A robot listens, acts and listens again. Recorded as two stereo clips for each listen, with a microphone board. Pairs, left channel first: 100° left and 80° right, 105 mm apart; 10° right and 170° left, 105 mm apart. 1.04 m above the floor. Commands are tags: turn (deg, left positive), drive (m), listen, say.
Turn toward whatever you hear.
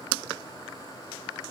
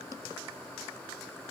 <listen/>
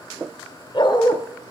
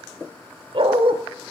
<turn deg="145"/>
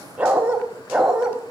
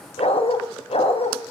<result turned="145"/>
<say>Facing the dog barking, 2 to 4 m away.</say>